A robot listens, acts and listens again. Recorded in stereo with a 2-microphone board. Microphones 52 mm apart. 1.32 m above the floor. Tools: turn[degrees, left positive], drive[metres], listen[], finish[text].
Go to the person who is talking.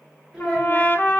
Action: turn[-30]
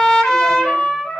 Action: listen[]
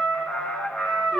Action: listen[]
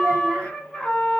Action: finish[I heard a child speaking, but can't make it out now. It was about 20° left or 140° right. I did not reach it.]